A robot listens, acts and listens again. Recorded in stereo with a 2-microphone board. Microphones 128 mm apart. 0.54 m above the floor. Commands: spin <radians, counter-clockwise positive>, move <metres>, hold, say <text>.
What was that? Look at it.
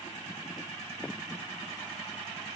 hold
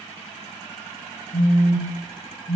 spin 1.22
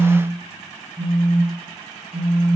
say Found it: a phone buzzing, straight ahead, under 1 m away.